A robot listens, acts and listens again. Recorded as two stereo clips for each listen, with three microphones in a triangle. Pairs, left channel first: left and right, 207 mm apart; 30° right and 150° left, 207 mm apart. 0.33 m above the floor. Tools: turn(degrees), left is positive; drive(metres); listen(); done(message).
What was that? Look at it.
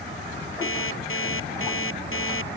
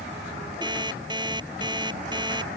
turn(degrees=80)
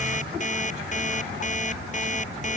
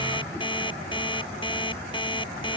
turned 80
turn(degrees=35)
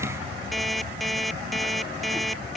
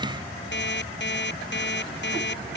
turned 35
done("Found it: an alarm clock, straight ahead.")